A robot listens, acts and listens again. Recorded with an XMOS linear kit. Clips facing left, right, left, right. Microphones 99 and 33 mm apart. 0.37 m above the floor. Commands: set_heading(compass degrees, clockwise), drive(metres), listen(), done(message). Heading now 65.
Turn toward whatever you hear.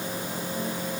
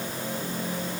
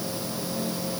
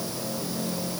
listen()
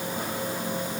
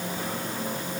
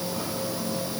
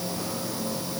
listen()
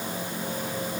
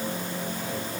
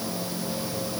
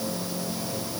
done("I can't make out anything.")